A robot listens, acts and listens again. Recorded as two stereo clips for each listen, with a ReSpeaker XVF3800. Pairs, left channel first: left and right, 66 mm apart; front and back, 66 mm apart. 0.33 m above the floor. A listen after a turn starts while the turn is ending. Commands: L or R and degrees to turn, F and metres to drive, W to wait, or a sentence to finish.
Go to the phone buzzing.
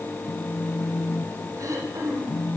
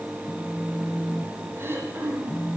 L55
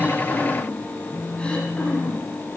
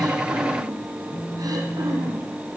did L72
R15
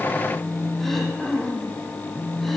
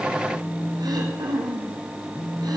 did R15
F1.0
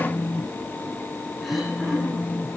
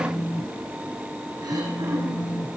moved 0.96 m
F1.0
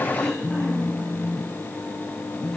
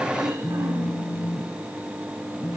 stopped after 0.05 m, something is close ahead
R10
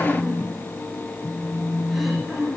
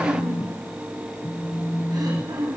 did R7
I am next to the phone buzzing.